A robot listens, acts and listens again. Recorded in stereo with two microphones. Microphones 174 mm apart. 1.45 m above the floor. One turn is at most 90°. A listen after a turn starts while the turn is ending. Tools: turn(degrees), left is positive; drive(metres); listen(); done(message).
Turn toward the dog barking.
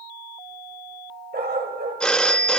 turn(degrees=-70)
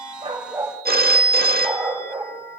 turn(degrees=-15)
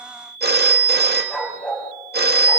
done("Facing the dog barking, over 4 m away.")